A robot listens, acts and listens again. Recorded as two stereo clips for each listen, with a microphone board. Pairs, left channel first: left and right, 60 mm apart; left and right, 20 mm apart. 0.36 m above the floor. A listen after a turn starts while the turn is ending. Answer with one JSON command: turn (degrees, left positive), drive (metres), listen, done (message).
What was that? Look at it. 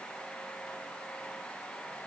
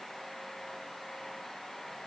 {"listen": true}
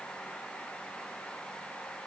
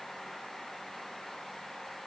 {"listen": true}
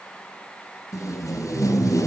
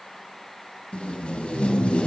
{"turn": 65}
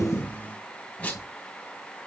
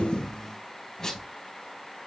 {"turn": 30}
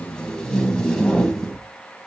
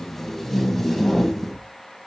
{"turn": 15}
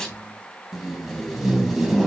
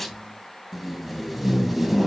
{"done": "Found it: tape being pulled, straight ahead."}